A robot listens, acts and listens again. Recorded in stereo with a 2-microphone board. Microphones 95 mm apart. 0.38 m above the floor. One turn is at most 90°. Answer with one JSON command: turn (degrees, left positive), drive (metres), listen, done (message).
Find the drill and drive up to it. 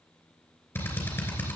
{"turn": 25}
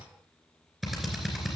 {"drive": 1.0}
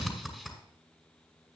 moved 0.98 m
{"drive": 1.0}
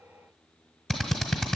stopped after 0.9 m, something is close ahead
{"done": "I am next to the drill."}